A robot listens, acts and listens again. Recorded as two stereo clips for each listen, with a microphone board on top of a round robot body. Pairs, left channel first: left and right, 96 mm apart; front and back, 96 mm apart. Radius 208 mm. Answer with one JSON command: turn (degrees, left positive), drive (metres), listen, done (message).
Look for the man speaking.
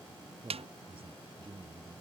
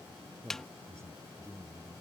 {"turn": -115}
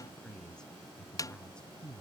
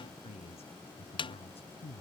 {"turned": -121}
{"turn": 10}
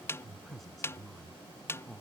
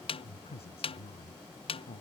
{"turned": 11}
{"done": "Found it: a man speaking, straight ahead."}